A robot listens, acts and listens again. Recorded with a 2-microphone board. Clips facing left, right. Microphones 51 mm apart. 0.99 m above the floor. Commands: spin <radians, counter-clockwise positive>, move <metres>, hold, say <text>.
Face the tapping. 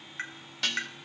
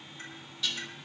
spin 1.57
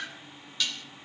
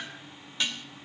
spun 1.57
say Found it: tapping, straight ahead, 2 to 4 m away.